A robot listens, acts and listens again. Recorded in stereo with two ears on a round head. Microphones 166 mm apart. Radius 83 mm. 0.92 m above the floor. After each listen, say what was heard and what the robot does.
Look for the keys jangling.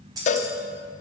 The keys jangling: about 20° right or 160° right. Turn 20° right.
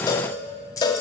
So it is at 20° left. Turn 20° left.
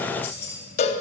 The keys jangling is now 15° left. Turn 15° left.
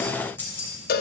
The keys jangling is now 15° left. Turn 15° left.
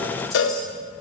Keep listening.
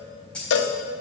Found it: keys jangling, straight ahead, 2 to 4 m away.